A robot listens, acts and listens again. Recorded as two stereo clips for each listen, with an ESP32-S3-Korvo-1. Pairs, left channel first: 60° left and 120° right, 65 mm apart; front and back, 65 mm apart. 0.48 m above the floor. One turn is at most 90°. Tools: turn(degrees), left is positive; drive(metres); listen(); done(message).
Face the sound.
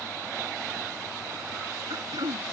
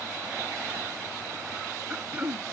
turn(degrees=-90)
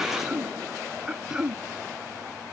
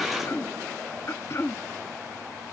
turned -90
turn(degrees=-45)
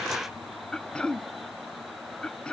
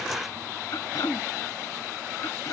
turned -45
turn(degrees=-15)
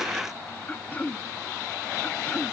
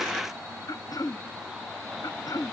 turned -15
done("Found it: throat clearing, straight ahead.")